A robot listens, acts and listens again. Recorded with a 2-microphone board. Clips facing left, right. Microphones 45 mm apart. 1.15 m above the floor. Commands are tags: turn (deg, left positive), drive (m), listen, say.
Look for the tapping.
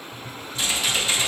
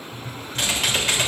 <turn deg="65"/>
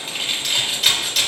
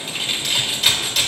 <listen/>
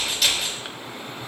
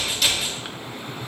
<turn deg="50"/>
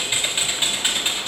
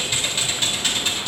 <listen/>
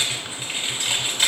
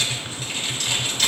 <turn deg="20"/>
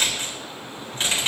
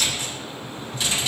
<say>Facing the tapping.</say>